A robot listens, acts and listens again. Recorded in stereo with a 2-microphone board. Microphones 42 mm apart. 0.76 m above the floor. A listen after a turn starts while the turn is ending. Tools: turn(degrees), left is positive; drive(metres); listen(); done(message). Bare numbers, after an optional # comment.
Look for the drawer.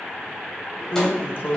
# The drawer: about 55° left or 125° left.
turn(55)
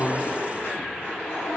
listen()
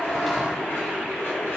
listen()
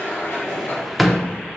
done("Facing the drawer.")